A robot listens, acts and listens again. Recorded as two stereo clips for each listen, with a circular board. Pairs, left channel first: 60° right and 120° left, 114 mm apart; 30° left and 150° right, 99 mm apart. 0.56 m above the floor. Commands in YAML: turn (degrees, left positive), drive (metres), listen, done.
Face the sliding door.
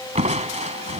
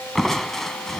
listen: true
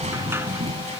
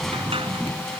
turn: -170
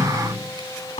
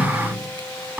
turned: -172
done: "Facing the sliding door."